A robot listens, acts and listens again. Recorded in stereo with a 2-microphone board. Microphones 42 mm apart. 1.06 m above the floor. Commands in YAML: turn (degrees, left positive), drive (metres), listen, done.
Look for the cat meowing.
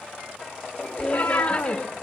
turn: 75
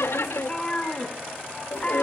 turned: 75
turn: 25
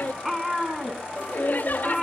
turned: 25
done: "Found it: a cat meowing, straight ahead, 2 to 4 m away."